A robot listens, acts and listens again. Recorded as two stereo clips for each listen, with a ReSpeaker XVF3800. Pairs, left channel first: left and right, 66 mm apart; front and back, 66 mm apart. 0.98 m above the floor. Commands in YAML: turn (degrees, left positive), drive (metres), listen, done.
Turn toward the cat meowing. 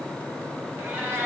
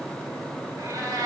turn: -155
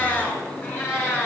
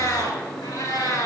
turn: 25
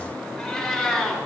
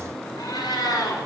done: "Facing the cat meowing."